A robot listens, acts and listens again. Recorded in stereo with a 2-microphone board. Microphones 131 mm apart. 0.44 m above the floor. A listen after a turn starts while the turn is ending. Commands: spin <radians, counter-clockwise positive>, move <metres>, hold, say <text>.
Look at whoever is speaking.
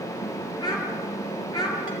spin 0.52
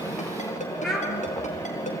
say Facing the child speaking.